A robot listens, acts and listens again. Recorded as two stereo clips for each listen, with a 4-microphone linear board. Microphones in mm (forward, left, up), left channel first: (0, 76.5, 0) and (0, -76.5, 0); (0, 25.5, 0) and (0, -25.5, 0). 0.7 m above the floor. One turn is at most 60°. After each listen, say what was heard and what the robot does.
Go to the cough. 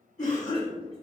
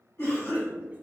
The cough: about 55° left or 125° left. Turn 55° left.
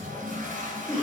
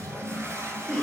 So it is at 15° left. Turn 15° left.
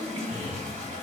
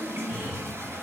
Drive 1.0 m forward.
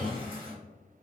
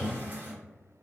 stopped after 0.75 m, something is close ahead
Keep listening.
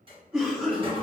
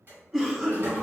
Arrived at the cough, straight ahead.